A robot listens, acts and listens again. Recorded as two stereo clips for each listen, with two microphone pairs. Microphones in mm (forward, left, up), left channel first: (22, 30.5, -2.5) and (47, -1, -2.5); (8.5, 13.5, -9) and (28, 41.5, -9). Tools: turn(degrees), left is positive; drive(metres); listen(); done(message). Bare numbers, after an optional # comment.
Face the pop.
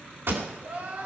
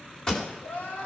# The pop: 60° right.
turn(-60)
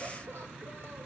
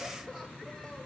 done("I heard a pop from this way, but can't make it out now.")